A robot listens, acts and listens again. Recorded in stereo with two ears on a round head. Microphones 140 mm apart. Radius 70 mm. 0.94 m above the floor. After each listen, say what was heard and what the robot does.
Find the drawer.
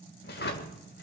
The drawer: about 75° left or 105° left. Turn 75° left.
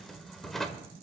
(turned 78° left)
Facing the drawer.